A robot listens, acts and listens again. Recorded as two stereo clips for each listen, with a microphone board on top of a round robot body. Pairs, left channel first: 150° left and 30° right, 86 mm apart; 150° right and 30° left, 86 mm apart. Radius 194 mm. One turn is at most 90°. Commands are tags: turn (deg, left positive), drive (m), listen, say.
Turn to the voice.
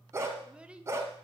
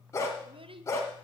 <turn deg="50"/>
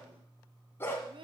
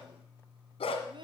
<say>Found it: a child speaking, straight ahead, 1 to 2 m away.</say>